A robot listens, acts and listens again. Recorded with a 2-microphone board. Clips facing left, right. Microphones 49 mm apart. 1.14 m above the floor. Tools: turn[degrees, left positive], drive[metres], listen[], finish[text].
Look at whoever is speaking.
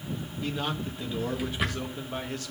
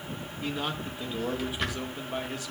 Action: turn[-30]
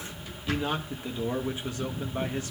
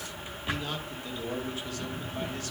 Thought: So it is at 25° left.
Action: turn[25]
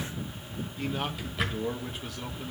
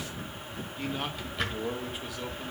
Action: finish[Found it: a man speaking, straight ahead.]